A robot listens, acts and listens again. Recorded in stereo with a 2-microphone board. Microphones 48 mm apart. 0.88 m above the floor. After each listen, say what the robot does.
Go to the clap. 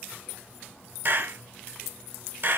Turn 45° right.
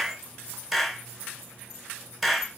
Drive 1.0 m forward.
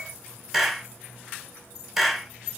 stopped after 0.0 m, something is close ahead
Blocked. The clap is further on, straight ahead.